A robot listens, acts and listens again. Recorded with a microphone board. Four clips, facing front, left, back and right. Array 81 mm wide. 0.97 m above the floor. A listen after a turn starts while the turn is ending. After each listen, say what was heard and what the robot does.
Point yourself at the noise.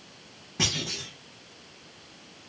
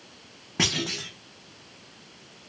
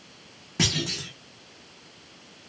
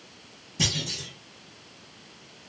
The clunk: 105° left. Turn 105° left.
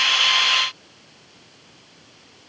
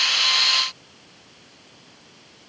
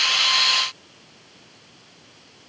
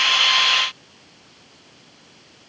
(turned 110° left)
I heard a clunk from this way, but can't make it out now.